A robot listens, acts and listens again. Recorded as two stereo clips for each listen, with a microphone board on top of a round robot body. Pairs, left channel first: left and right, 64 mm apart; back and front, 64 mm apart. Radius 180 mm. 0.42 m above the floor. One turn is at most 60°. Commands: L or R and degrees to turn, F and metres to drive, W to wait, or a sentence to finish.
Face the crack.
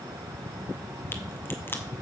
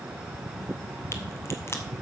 L60
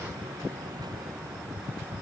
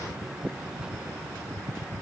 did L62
L60
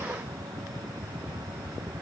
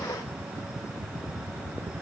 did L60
L15
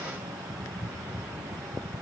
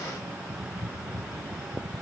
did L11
I heard a crack from this way, but can't make it out now.